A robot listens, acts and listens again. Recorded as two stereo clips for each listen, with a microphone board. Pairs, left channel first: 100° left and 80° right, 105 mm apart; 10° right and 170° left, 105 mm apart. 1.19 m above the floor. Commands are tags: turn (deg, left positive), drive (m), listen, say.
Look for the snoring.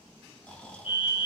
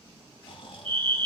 <turn deg="20"/>
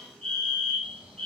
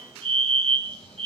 <listen/>
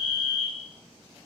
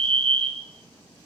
<listen/>
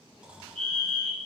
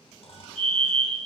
<say>Facing the snoring, 2 to 4 m away.</say>